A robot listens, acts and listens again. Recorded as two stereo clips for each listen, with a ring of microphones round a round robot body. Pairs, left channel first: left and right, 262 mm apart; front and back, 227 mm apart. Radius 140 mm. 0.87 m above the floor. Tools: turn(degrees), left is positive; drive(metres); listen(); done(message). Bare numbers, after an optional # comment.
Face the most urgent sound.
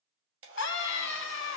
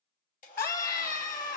# The scream: 50° left.
turn(50)
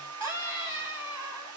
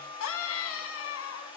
# The scream is now 10° right.
turn(-10)
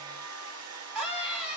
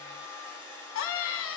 done("Facing the scream, 1 to 2 m away.")